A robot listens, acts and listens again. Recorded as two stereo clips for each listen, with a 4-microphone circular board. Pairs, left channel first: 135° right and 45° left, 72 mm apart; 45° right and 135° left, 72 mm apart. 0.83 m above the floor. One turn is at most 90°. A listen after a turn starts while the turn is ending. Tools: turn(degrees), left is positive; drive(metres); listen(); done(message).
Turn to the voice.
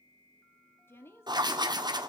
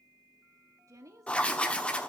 turn(degrees=90)
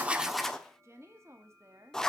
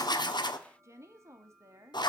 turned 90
turn(degrees=90)
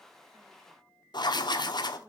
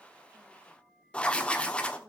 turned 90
listen()
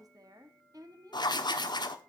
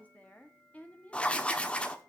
turn(degrees=25)
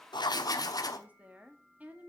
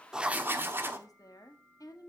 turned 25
turn(degrees=-20)
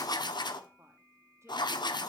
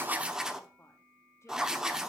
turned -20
listen()
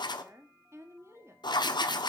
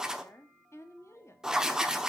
done("Facing the woman speaking, 1 to 2 m away.")